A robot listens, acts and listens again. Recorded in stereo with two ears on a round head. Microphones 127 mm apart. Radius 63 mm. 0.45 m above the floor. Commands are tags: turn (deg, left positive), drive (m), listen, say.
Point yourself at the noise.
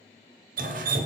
<turn deg="-65"/>
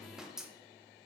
<say>Found it: dripping, straight ahead, under 1 m away.</say>